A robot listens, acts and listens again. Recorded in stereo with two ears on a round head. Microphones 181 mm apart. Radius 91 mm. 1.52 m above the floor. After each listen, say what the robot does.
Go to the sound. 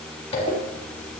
Turn 35° left.
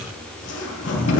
Turn 115° left.
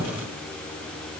Keep listening.
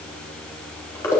Turn 15° left.
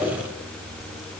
Drive 1.0 m forward.
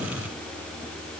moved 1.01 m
Keep listening.
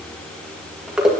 Drive 1.0 m forward.
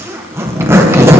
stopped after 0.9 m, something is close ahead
Turn 15° right.
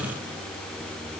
Keep listening.
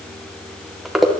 I am next to the zipper.